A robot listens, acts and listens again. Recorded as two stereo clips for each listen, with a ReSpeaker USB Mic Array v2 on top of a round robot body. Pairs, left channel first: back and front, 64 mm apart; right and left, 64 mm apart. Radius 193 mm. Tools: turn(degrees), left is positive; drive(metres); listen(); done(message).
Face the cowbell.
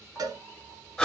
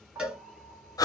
turn(degrees=15)
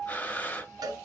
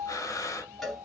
done("Found it: a cowbell, straight ahead, 1 to 2 m away.")